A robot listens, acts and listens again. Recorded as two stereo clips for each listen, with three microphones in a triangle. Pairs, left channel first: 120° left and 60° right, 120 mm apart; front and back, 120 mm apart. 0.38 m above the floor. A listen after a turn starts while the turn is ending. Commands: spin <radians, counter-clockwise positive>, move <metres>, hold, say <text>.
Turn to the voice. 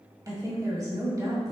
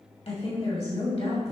say Facing the woman speaking, 2 to 4 m away.